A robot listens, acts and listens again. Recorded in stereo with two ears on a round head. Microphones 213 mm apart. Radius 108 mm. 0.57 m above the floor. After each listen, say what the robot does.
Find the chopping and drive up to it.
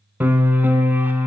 Keep listening.
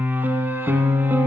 Keep listening.
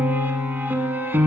I can't make out chopping, only a piano.